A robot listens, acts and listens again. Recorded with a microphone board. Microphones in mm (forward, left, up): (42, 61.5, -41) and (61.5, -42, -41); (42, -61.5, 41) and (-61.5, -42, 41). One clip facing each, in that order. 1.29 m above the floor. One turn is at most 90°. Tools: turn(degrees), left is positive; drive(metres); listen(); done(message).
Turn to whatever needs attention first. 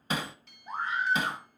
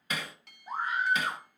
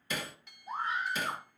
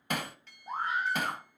turn(degrees=-90)
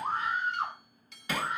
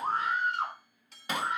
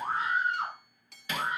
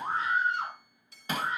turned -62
turn(degrees=-90)
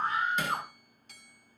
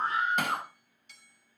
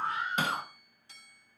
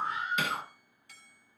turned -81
turn(degrees=-15)
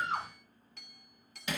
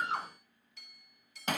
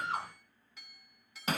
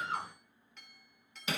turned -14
done("Facing the scream, over 4 m away.")